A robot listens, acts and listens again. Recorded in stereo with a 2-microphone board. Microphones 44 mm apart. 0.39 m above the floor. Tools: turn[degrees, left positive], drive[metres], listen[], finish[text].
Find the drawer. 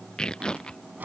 Thought: The drawer: about 45° right or 135° right.
Action: turn[-45]
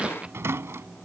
Thought: So it is at 90° right.
Action: turn[-90]
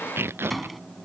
Action: finish[Found it: a drawer, straight ahead.]